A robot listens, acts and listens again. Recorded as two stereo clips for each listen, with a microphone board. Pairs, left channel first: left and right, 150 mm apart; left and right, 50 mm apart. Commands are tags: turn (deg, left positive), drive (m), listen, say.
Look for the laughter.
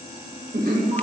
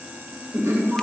<turn deg="-75"/>
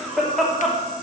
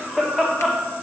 <say>Found it: laughter, straight ahead.</say>